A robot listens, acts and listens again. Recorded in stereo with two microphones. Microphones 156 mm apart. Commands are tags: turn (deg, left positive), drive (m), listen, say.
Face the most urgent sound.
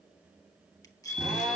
<turn deg="60"/>
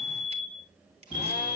<turn deg="45"/>
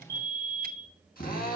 <turn deg="20"/>
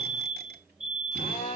<say>Found it: a fire alarm, straight ahead.</say>